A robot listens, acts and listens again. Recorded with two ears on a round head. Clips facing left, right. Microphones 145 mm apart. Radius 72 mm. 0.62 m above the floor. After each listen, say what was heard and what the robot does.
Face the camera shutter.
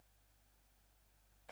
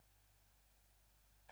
Keep listening.
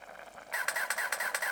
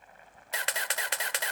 The camera shutter: about 35° right or 145° right. Turn 35° right.
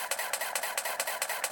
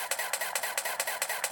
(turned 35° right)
Found it: a camera shutter, straight ahead, 1 to 2 m away.